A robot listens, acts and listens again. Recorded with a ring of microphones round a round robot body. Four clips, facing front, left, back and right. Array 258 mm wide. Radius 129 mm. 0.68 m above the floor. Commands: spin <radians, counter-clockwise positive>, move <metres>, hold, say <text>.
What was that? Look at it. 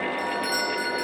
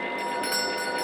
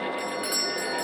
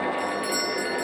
spin 2.27
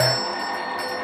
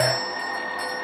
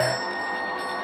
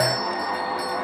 spin -0.44
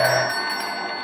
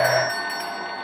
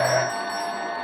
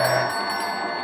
spin -0.17
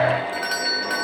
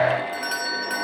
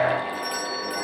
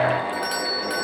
say Facing the doorbell, over 4 m away.